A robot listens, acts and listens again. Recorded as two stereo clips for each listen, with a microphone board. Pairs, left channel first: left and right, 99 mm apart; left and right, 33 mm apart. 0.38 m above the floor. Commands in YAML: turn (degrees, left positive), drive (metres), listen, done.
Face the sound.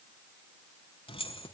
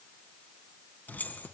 turn: 65
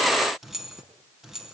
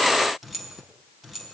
done: "Facing the keys jangling, 2 to 4 m away."